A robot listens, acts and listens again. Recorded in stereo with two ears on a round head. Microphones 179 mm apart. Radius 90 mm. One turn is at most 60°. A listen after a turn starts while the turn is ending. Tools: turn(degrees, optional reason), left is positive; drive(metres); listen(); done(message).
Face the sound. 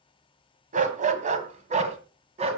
turn(degrees=-30, reason="The dog barking: about 30° right or 150° right.")
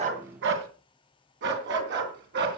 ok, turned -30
turn(degrees=-60, reason="So it is at 125° right.")
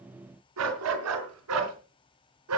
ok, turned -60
turn(degrees=-60, reason="The dog barking is now 85° right.")
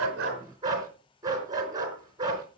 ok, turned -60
turn(degrees=-20, reason="The dog barking is now 20° right.")
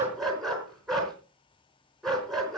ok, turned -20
done("Found it: a dog barking, straight ahead, 2 to 4 m away.")